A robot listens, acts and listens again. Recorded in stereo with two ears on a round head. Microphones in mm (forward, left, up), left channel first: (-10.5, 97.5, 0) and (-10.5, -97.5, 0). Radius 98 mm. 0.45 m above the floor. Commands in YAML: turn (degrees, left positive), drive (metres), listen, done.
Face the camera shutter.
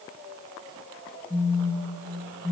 listen: true
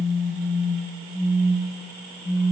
listen: true
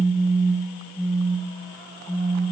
done: "I can't make out a camera shutter, only a phone buzzing."